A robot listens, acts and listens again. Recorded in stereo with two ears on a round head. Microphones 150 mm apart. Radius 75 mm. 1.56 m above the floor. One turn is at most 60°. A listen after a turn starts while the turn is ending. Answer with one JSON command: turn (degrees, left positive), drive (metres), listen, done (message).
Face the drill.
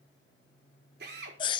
{"turn": -60}
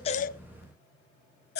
{"listen": true}
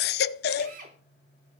{"turn": -50}
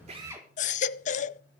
{"turn": -15}
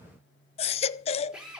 {"done": "Found it: a drill, straight ahead, over 4 m away."}